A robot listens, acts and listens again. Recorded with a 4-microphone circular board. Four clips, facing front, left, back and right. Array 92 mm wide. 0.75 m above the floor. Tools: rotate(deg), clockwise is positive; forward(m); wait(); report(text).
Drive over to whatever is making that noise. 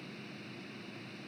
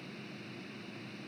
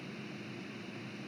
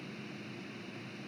wait()
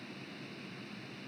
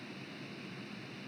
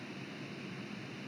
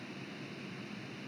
wait()
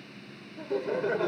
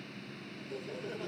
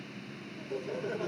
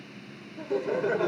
rotate(55)
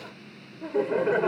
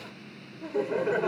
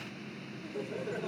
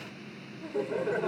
rotate(-15)
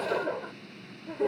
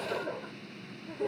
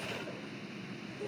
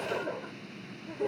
forward(1.0)
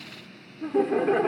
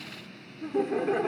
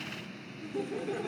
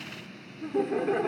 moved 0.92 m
forward(1.0)
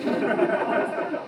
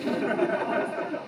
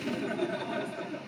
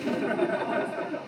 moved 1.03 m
forward(1.0)
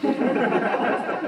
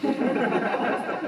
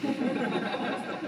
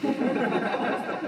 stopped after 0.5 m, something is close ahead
rotate(-10)
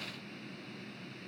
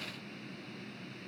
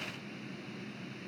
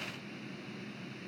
wait()
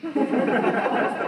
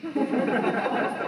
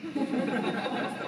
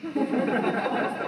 report("Arrived at the laughter, straight ahead.")